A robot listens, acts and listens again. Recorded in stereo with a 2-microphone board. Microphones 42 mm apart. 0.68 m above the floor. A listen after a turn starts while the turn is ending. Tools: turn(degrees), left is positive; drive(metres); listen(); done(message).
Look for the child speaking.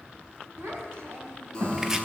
turn(degrees=-90)
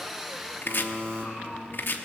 done("Found it: a child speaking, straight ahead, 2 to 4 m away.")